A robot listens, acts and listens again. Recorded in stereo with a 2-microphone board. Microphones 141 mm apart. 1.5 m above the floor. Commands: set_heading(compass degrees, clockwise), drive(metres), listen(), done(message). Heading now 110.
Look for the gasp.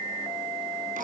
listen()
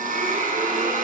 listen()
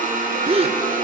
set_heading(155)
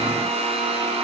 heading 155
listen()
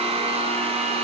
done("I heard a gasp, but can't make it out now. It was about straight ahead or 90° right.")